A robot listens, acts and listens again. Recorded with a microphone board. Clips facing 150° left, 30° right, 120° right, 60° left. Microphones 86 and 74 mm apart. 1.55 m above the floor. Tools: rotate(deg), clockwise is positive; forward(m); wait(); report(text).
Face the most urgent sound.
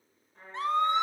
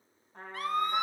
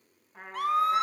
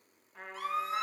rotate(145)
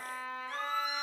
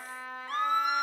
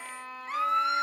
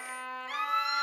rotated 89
rotate(60)
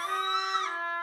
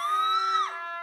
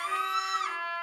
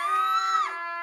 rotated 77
rotate(-15)
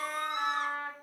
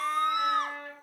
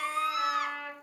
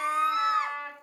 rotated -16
report("Facing the scream.")